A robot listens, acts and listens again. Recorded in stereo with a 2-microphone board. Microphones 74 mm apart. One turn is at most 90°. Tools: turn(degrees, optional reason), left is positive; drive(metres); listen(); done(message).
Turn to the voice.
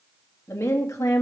turn(degrees=45, reason="The woman speaking: about 45° left or 135° left.")
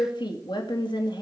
turn(degrees=90, reason="So it is at 90° left.")
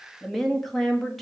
done("Found it: a woman speaking, straight ahead.")